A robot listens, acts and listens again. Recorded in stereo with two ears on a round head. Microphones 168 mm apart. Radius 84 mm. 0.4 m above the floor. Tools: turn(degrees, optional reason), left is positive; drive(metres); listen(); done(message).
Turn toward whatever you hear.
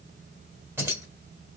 turn(degrees=-15, reason="The keys jangling: about 15° right or 165° right.")
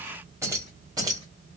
turn(degrees=-20, reason="The keys jangling: about 20° right or 160° right.")
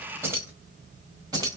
turn(degrees=-20, reason="The keys jangling: about 20° right or 160° right.")
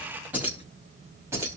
turn(degrees=-15, reason="The keys jangling: about 15° right or 165° right.")
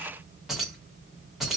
turn(degrees=-30)
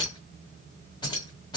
turn(degrees=25, reason="So it is at 25° left.")
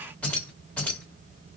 turn(degrees=10, reason="The keys jangling is now 10° left.")
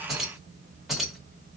done("Found it: keys jangling, straight ahead, 2 to 4 m away.")